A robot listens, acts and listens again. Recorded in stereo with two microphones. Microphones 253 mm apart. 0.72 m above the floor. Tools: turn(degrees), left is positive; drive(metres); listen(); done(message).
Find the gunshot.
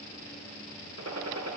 turn(degrees=-90)
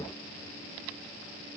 done("I heard a gunshot from this way, but can't make it out now.")